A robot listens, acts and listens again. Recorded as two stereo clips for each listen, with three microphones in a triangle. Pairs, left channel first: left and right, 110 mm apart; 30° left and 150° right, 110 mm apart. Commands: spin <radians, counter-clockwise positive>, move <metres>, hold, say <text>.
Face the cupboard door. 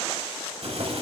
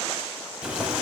hold
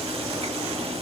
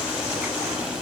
hold
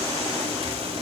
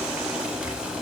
say I can't make out a cupboard door, only boiling.